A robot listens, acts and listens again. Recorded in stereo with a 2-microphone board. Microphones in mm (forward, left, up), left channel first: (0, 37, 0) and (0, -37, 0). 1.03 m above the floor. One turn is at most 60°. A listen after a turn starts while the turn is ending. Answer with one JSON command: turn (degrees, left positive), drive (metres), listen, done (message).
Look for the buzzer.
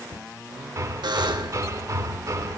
{"turn": -60}
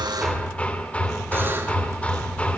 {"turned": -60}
{"turn": -30}
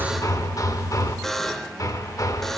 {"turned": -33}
{"done": "Facing the buzzer."}